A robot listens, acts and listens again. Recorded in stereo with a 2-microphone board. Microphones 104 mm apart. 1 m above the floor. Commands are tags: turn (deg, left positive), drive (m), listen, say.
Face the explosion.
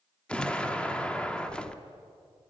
<turn deg="30"/>
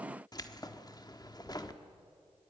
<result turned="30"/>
<listen/>
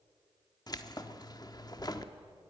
<say>I heard an explosion, but can't make it out now. It was about 20° right or 140° left.</say>